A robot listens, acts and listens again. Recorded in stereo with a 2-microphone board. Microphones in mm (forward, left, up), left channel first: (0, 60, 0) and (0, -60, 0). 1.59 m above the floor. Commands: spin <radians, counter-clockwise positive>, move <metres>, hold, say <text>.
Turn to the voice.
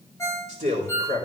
spin -1.57
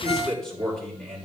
say Found it: a man speaking, straight ahead.